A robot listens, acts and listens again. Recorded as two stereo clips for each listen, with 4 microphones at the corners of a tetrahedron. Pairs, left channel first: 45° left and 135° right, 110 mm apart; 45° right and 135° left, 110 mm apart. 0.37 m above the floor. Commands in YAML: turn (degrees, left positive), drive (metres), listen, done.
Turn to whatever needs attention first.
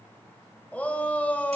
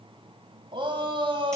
turn: 120
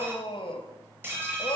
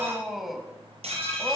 turn: 45
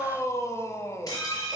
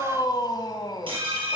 turn: -10
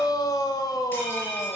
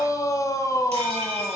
done: "Found it: a shout, straight ahead, 1 to 2 m away."